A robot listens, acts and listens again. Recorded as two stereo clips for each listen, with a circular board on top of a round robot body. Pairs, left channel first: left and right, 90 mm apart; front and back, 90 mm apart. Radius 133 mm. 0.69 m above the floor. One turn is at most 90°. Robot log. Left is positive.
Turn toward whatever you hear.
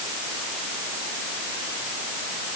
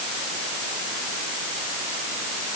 cmd idle
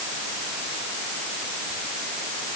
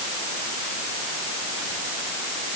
cmd idle
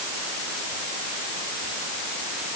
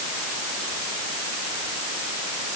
end: I can't make out anything to turn to.